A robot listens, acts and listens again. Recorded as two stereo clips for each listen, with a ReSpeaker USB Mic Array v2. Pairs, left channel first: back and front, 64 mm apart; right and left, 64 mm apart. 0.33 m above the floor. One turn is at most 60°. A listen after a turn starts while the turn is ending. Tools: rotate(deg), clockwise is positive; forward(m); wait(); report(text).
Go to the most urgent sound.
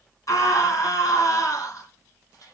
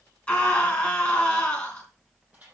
rotate(60)
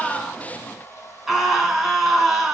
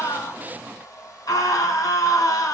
rotate(60)
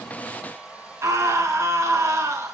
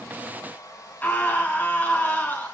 rotate(30)
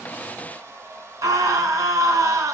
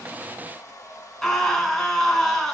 forward(1.0)
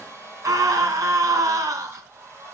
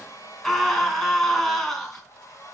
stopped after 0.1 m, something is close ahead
report("Something is in my way. I am facing the scream but have not reached it.")